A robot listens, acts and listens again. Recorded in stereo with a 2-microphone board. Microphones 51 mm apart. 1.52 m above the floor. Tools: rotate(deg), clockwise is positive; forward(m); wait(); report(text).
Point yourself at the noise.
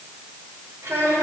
rotate(75)
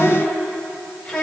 rotate(-15)
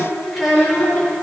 report("Found it: a child speaking, straight ahead.")